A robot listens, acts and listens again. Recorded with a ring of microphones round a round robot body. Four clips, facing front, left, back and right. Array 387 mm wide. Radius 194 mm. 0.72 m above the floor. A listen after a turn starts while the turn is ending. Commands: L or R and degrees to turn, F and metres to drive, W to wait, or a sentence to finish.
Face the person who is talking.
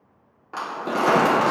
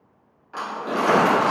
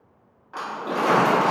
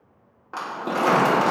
W
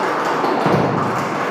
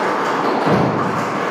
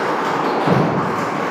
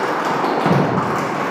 W
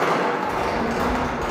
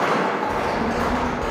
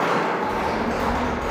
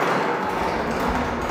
R155
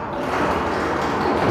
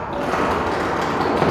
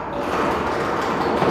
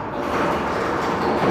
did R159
W
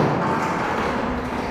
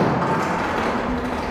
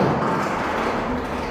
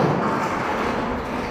Found it: a child speaking, straight ahead, 1 to 2 m away.